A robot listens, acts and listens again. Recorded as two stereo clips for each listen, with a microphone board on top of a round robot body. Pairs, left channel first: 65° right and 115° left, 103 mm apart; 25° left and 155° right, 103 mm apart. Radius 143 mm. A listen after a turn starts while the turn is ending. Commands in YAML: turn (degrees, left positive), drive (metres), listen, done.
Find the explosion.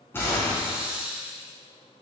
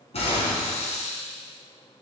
done: "Facing the explosion."